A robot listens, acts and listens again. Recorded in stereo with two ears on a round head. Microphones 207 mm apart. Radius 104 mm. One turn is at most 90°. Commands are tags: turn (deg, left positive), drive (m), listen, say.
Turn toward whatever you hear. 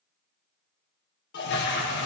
<turn deg="45"/>
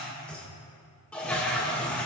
<say>Facing the toilet flushing.</say>